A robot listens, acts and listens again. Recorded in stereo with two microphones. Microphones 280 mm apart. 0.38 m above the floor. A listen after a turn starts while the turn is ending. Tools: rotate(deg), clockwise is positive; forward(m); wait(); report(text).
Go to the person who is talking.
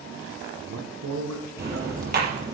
rotate(75)
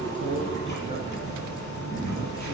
wait()
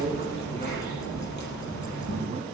rotate(20)
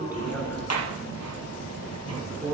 forward(1.0)
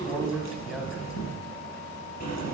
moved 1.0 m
forward(1.0)
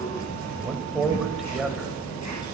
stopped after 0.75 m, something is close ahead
report("I am next to the man speaking.")